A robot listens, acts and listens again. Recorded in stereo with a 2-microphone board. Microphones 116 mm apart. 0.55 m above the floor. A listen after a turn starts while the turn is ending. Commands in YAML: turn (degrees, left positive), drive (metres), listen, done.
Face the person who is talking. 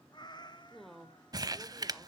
turn: 30
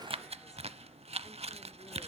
listen: true
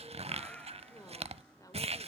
listen: true
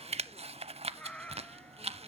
done: "I heard a woman speaking, but can't make it out now. It was about 30° right or 150° left."